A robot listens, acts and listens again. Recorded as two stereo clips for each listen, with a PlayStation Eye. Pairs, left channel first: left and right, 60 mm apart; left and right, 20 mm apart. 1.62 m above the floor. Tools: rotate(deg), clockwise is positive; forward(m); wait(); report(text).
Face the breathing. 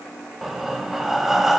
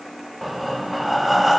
rotate(30)
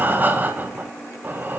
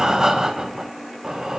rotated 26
rotate(150)
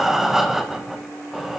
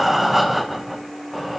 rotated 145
report("Facing the breathing, 1 to 2 m away.")